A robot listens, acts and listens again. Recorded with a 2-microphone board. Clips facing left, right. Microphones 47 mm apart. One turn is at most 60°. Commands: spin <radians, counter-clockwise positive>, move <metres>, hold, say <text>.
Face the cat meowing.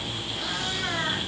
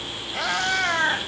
spin -1.05
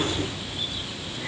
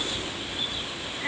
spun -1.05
spin -0.52
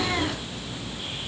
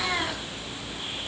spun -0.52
hold
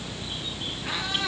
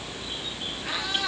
say Found it: a cat meowing, straight ahead, over 4 m away.